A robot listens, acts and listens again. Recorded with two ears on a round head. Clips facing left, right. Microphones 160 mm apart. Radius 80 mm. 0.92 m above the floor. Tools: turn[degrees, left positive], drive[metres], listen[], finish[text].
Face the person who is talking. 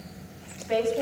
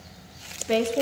Thought: The woman speaking: about 50° right or 130° right.
Action: turn[-50]
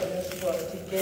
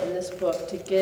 Thought: So it is at 75° right.
Action: turn[-75]
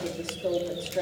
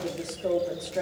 Action: finish[Found it: a woman speaking, straight ahead, 2 to 4 m away.]